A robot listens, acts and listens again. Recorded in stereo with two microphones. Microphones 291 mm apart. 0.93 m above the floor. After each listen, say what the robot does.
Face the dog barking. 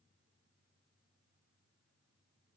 Keep listening.
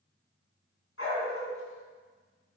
Turn 50° left.
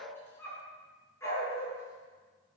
Turn 10° left.
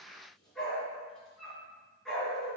Facing the dog barking, over 4 m away.